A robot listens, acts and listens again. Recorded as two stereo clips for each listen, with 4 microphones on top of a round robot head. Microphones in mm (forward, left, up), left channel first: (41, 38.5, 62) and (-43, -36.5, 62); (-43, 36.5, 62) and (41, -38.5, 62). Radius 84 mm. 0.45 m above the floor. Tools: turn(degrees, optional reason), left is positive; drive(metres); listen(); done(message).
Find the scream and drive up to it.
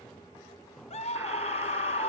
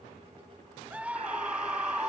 turn(degrees=35, reason="The scream: 35° left.")
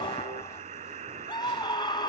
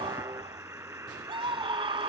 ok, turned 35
drive(metres=1.0)
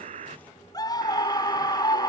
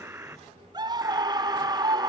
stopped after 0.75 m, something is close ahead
done("I am next to the scream.")